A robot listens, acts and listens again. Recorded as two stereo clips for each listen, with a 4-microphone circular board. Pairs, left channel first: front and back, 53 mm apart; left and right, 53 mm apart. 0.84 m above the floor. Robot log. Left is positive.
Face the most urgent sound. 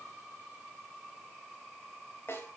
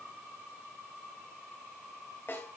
cmd idle
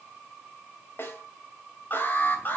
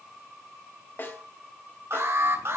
note: The alarm: 55° right.
cmd yaw -55
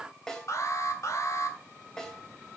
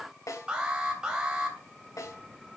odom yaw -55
note: The alarm is now 15° right.
cmd yaw -15
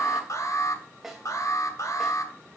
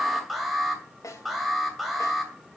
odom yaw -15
end: Found it: an alarm, straight ahead, 2 to 4 m away.